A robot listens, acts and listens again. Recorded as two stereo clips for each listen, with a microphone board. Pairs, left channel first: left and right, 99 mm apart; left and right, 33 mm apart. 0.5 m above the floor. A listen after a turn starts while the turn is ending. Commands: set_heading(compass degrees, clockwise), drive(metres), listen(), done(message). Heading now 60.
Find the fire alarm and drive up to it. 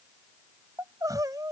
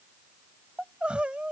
listen()
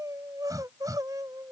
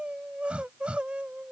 listen()
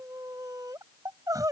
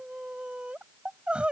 done("I can't make out a fire alarm, only crying.")